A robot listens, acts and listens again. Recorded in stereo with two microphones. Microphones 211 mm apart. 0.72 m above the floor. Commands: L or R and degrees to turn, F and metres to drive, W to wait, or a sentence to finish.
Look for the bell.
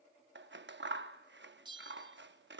R20
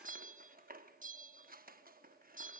R140
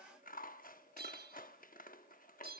R50
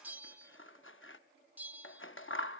R10
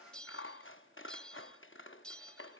Facing the bell.